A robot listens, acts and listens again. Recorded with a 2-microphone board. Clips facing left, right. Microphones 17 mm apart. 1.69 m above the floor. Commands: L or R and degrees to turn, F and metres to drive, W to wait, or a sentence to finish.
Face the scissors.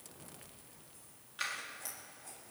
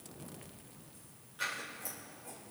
L30
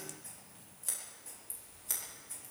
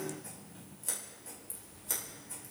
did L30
Found it: scissors, straight ahead, over 4 m away.